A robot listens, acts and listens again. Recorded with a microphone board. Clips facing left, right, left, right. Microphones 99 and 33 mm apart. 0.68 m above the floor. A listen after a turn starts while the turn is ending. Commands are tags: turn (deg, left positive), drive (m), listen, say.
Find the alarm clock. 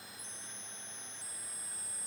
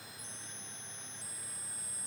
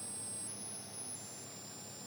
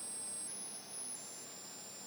<listen/>
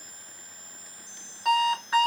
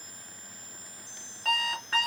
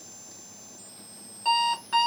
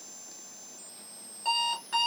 <turn deg="15"/>
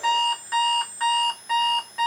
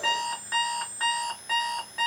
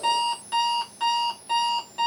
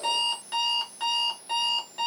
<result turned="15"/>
<say>Facing the alarm clock, 1 to 2 m away.</say>